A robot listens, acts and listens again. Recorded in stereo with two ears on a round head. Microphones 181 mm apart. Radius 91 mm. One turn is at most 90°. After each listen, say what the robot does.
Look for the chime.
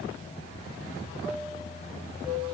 Turn 25° right.
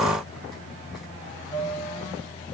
Found it: a chime, straight ahead.